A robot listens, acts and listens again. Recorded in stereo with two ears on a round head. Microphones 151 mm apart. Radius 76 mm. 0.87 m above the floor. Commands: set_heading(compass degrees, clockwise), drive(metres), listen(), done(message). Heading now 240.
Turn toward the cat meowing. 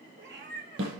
set_heading(305)
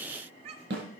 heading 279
set_heading(314)
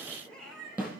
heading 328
done("Facing the cat meowing.")